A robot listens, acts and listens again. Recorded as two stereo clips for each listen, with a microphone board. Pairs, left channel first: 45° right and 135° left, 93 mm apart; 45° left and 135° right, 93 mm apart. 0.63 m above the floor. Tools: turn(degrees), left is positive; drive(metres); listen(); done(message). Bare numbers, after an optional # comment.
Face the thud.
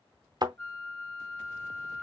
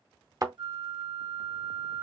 # The thud: 175° left.
turn(175)
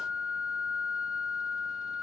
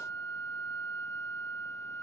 done("I heard a thud from this way, but can't make it out now.")